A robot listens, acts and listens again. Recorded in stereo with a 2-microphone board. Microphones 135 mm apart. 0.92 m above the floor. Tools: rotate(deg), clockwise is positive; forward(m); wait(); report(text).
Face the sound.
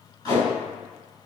rotate(-30)
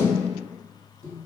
rotate(-125)
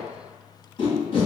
rotate(-40)
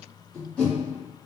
rotate(-10)
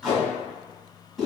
report("Facing the tape being pulled.")